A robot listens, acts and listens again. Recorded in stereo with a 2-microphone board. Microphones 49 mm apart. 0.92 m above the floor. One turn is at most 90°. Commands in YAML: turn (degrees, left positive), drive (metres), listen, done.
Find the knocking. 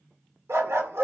listen: true
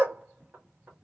turn: -30
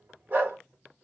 listen: true
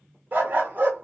listen: true
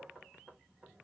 done: "Found it: knocking, straight ahead, 1 to 2 m away."